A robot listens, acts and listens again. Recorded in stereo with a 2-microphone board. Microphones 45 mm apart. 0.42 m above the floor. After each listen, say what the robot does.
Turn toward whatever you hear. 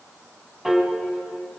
Turn 30° right.
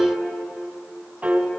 Turn 135° right.
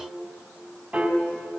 Turn 20° right.
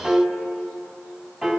Found it: a piano, straight ahead.